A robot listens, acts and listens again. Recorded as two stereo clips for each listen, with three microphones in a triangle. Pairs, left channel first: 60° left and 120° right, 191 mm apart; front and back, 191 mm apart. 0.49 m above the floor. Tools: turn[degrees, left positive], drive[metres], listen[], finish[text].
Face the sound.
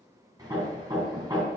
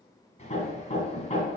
Thought: The hammering: 50° right.
Action: turn[-50]
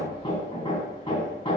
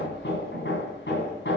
Action: finish[Found it: hammering, straight ahead, 2 to 4 m away.]